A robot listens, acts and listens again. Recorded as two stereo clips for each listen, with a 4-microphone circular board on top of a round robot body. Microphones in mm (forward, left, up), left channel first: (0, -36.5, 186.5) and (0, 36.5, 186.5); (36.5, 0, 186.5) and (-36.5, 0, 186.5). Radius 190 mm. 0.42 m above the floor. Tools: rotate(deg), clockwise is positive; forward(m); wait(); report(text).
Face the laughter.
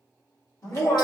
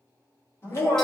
rotate(50)
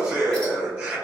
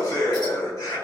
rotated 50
rotate(-15)
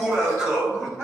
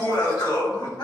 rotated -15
report("Found it: laughter, straight ahead, 2 to 4 m away.")